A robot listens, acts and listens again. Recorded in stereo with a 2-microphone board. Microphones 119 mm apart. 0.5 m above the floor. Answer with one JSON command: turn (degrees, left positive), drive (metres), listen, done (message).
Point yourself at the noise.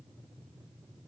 {"listen": true}
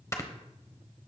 {"turn": 25}
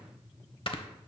{"turn": 130}
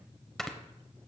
{"done": "Found it: snoring, straight ahead, 1 to 2 m away."}